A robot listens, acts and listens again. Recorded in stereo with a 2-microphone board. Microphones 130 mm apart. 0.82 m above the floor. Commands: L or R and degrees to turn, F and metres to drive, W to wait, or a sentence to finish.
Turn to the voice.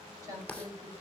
R25
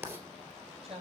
R130
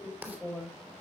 L15
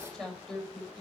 Found it: a woman speaking, straight ahead.